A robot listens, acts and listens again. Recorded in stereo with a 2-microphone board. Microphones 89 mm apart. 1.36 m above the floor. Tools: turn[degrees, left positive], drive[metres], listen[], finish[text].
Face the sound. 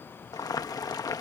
Thought: The boiling: about 45° left or 135° left.
Action: turn[45]
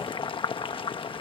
Thought: So it is at 85° left.
Action: turn[85]
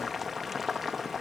Action: finish[Facing the boiling.]